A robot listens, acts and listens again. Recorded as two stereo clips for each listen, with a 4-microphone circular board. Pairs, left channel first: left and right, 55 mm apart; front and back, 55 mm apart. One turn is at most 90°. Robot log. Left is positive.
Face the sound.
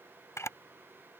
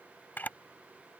note: The camera shutter: 60° left.
cmd yaw +60
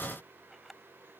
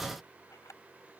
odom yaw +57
end: Facing the camera shutter.